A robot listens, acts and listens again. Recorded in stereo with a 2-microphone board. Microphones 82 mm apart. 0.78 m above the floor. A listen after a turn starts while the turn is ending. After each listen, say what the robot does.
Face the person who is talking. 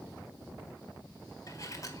Keep listening.
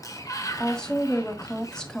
Turn 30° left.
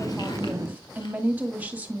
Turn 20° right.
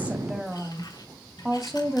Found it: a woman speaking, straight ahead.